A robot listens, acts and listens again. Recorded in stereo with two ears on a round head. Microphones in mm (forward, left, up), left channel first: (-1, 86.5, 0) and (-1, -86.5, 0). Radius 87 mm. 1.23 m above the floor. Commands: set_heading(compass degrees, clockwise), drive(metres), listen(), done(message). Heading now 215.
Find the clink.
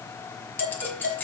set_heading(185)
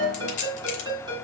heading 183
set_heading(43)
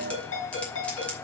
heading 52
set_heading(42)
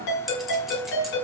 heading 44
listen()
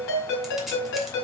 done("Facing where the clink came from. I can't hear it now.")